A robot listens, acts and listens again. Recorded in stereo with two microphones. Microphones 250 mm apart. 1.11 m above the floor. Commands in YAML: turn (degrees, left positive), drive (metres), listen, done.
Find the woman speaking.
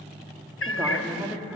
turn: -30
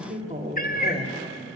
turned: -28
turn: -155
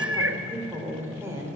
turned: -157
turn: -10
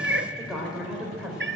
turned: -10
done: "Facing the woman speaking."